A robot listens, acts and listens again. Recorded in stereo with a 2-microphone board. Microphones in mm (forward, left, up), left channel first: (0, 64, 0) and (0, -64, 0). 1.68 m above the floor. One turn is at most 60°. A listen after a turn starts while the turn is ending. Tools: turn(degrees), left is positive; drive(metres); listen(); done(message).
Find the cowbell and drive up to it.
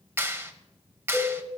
turn(degrees=30)
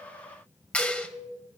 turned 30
listen()
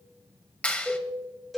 drive(metres=1.0)
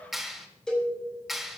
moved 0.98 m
drive(metres=1.0)
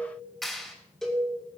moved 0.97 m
drive(metres=1.0)
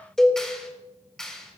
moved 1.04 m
drive(metres=1.0)
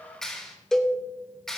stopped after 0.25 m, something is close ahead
done("Arrived at the cowbell, straight ahead.")